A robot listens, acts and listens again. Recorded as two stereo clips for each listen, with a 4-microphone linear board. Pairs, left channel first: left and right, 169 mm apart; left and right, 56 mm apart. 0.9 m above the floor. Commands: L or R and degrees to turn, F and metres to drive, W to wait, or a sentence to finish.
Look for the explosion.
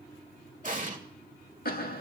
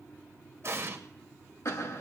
R50
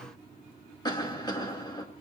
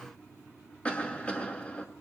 W
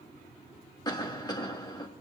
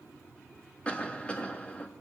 I heard an explosion, but can't make it out now. It was about straight ahead or 80° right.